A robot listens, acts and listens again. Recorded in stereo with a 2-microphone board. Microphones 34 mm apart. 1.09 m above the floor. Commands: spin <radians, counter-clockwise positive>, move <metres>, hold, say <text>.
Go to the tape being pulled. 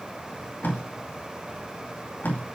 spin 1.31
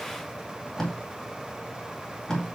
spin 0.35
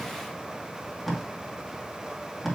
move 1.0
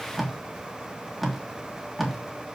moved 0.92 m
move 1.0
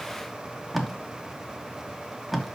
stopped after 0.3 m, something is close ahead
say I am next to the tape being pulled.